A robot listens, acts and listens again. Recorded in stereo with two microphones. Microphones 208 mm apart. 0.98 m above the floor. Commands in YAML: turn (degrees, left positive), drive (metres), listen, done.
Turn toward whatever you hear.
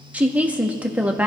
turn: -30
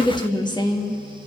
turn: 20
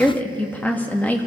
turn: 10
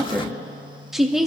done: "Found it: a woman speaking, straight ahead."